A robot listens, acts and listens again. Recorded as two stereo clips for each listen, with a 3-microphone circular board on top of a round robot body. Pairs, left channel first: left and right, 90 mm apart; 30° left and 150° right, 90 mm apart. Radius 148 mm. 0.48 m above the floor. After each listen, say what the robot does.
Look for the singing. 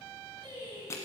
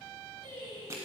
Turn 120° right.
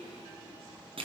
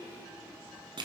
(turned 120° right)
Keep listening.
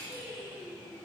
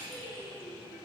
Found it: singing, straight ahead.